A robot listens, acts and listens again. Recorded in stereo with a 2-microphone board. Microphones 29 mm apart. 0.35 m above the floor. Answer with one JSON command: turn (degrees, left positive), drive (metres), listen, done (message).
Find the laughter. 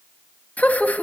{"turn": 65}
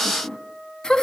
{"turn": 20}
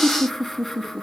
{"done": "Facing the laughter."}